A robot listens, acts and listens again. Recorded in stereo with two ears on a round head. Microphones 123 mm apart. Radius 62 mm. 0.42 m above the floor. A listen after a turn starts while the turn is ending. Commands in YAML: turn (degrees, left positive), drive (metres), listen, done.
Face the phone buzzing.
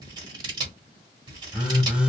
turn: -30
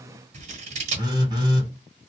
turn: -145
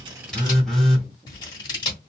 done: "Facing the phone buzzing, 1 to 2 m away."